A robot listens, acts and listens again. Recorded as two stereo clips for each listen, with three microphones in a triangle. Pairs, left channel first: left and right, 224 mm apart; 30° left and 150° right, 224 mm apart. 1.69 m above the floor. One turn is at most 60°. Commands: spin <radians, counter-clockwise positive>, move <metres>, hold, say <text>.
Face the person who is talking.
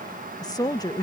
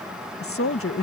spin 0.26
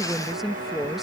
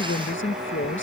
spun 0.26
say Found it: a woman speaking, straight ahead.